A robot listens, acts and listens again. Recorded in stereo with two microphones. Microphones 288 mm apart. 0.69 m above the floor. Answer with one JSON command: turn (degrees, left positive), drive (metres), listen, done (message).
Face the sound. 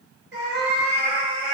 {"turn": -30}
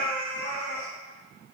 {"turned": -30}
{"turn": 10}
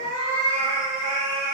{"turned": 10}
{"turn": 30}
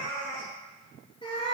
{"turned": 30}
{"turn": 20}
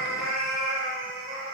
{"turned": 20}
{"done": "Found it: a cat meowing, straight ahead, 1 to 2 m away."}